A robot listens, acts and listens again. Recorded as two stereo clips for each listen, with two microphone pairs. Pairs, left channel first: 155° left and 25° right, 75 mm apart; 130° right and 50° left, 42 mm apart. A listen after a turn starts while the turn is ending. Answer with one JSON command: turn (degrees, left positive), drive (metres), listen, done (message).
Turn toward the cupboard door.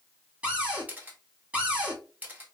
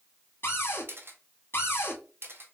{"turn": -95}
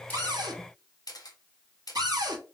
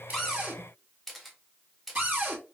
{"done": "Facing the cupboard door."}